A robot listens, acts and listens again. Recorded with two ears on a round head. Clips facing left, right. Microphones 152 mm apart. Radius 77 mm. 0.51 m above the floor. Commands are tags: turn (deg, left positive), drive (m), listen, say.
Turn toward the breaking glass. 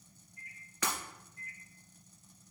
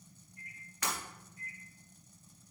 <turn deg="90"/>
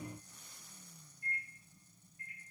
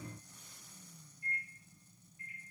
<say>I heard breaking glass from this way, but can't make it out now.</say>